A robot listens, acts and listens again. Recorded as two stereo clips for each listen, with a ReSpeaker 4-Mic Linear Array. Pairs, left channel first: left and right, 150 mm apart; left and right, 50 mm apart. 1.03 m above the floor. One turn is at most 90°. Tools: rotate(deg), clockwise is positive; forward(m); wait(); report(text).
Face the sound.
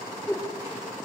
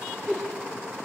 rotate(-15)
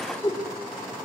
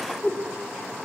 rotate(-90)
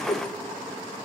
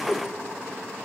rotate(-60)
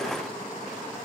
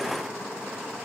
wait()
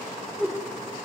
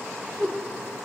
report("Found it: a whoosh, straight ahead.")